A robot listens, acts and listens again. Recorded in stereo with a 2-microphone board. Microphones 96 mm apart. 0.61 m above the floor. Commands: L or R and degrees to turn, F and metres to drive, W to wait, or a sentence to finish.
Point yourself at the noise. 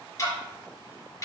L35
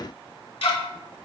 L110
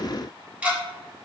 R15
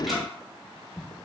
Facing the ticking.